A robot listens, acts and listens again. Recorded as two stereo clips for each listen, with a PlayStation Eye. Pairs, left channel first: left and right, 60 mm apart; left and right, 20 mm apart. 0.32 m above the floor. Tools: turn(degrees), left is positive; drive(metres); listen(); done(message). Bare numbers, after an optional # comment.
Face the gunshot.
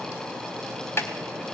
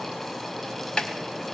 listen()
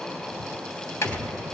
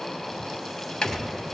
# The gunshot: about 25° left or 155° left.
turn(25)
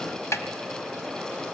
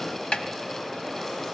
listen()
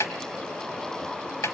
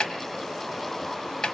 done("I heard a gunshot, but can't make it out now. It was about straight ahead or 130° left.")